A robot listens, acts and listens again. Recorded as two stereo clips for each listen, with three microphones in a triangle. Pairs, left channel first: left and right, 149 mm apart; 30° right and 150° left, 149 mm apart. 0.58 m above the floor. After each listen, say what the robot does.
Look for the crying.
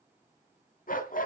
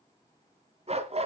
Keep listening.
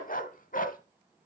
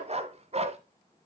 Keep listening.
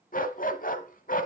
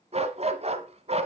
I can't make out crying to turn to.